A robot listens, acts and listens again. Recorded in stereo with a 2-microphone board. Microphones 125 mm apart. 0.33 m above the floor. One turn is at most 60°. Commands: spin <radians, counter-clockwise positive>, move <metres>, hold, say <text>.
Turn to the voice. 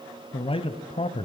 spin 0.87
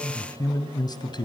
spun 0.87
spin 0.61
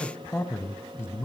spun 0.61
spin 0.35
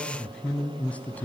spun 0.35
spin 0.17
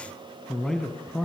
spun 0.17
say Facing the man speaking, 2 to 4 m away.